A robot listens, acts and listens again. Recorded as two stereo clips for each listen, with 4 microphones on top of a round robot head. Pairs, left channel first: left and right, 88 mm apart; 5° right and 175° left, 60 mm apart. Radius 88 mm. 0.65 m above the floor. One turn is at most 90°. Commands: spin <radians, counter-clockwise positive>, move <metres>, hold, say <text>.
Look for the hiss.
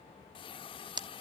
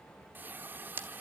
spin 1.57
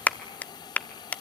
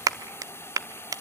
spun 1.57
spin 0.79
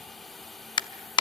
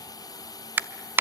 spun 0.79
say Found it: a hiss, straight ahead.